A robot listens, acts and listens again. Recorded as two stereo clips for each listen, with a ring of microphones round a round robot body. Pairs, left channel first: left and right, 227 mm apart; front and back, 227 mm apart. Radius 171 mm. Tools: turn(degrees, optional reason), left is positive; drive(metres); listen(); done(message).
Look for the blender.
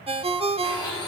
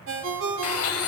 turn(degrees=10, reason="The blender: 10° left.")
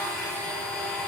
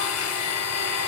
done("Facing the blender.")